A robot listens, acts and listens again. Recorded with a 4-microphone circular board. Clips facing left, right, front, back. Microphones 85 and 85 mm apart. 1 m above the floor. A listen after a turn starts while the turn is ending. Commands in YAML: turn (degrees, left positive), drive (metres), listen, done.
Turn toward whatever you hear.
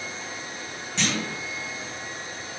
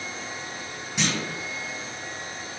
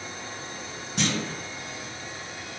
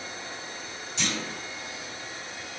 turn: -15
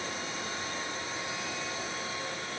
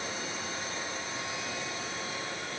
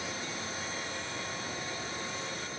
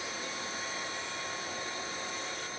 done: "Facing where the clunk came from. I can't hear it now."